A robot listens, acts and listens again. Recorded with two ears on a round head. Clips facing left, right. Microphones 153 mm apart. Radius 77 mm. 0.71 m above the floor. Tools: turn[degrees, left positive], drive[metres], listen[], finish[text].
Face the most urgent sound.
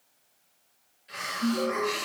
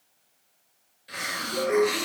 Thought: The alarm: about 45° right or 135° right.
Action: turn[-45]
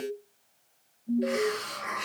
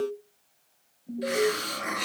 Action: finish[Found it: an alarm, straight ahead.]